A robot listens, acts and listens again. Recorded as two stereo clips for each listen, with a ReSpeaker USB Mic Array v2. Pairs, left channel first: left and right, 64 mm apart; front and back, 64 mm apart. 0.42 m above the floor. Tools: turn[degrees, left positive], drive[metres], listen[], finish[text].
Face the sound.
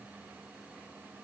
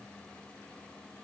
Action: listen[]
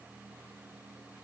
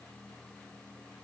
Action: listen[]
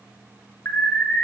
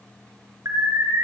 Thought: The alarm: 145° left.
Action: turn[145]
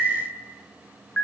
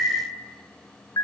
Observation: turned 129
Thought: The alarm is now 15° left.
Action: turn[15]
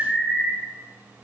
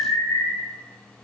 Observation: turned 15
Action: finish[Found it: an alarm, straight ahead.]